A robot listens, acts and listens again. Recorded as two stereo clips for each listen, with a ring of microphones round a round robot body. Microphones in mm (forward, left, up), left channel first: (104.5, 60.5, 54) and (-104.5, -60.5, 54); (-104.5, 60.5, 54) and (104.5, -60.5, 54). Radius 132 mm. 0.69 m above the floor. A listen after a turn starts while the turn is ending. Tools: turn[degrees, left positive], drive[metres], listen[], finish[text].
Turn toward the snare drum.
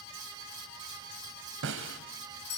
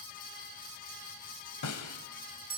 Thought: The snare drum: 170° left.
Action: turn[170]
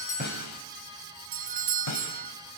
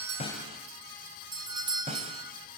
Thought: The snare drum is now 35° left.
Action: turn[35]
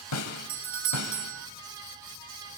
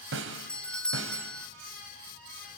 Thought: The snare drum is now 10° left.
Action: turn[10]
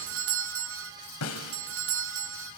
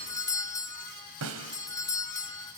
Action: finish[Facing the snare drum.]